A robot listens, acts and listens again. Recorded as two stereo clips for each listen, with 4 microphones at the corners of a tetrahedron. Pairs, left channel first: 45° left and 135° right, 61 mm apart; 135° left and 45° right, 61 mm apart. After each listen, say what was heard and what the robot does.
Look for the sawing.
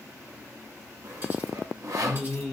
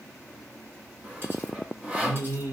The sawing: 110° right. Turn 110° right.
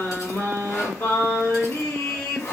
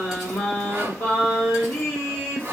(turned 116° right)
Found it: sawing, straight ahead.